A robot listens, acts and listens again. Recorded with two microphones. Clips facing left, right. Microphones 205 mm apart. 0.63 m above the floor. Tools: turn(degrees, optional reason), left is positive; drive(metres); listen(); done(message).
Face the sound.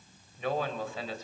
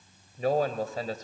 turn(degrees=-45, reason="The man speaking: about 45° right or 135° right.")
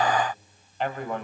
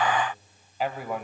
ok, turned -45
done("Facing the man speaking.")